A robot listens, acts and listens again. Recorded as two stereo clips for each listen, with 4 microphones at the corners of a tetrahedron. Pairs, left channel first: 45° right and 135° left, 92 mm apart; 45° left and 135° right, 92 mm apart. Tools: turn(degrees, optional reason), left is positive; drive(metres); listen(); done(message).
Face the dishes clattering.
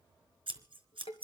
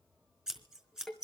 turn(degrees=-40, reason="The dishes clattering: 40° right.")
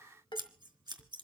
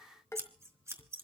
turn(degrees=-15, reason="The dishes clattering is now 15° right.")
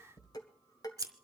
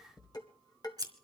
done("Facing the dishes clattering, 1 to 2 m away.")